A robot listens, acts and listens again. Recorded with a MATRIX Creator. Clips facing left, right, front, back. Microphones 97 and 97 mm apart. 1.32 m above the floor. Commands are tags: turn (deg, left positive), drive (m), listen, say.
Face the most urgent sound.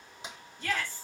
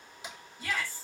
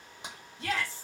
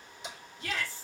<turn deg="-10"/>
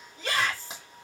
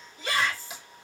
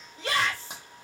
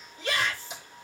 <say>Found it: a shout, straight ahead, 2 to 4 m away.</say>